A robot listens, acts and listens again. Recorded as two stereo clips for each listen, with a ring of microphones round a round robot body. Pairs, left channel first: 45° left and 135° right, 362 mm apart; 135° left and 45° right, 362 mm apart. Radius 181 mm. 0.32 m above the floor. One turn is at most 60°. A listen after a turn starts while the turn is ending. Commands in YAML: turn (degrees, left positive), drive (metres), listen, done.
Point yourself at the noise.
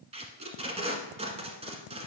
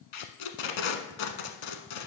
turn: 60
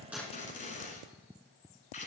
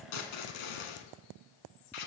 turn: 60
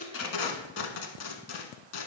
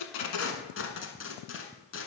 turn: 60
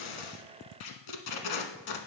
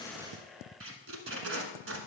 turn: 15
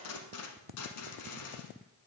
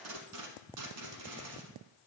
done: "Found it: tape being pulled, straight ahead, 1 to 2 m away."